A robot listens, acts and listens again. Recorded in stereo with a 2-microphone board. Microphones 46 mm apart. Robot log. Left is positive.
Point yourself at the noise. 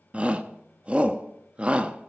note: The shout: about 25° right or 155° right.
cmd yaw -25
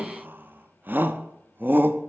note: So it is at 120° right.
cmd yaw -120
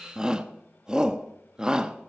note: The shout is now 20° right.
cmd yaw -20
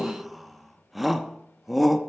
end: Found it: a shout, straight ahead, under 1 m away.